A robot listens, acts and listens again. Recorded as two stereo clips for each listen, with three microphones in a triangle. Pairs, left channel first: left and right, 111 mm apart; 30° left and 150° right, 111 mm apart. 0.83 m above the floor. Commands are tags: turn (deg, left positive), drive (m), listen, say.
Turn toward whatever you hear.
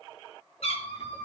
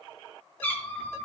<turn deg="100"/>
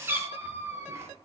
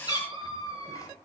<turn deg="-30"/>
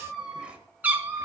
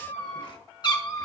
<turn deg="-25"/>
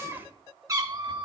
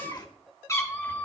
<turn deg="-45"/>
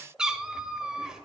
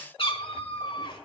<say>Found it: a cat meowing, straight ahead.</say>